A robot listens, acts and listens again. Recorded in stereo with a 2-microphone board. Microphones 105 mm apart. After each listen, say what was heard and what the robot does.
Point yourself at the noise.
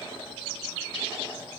Keep listening.
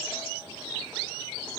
Keep listening.
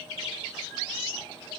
I can't make out anything.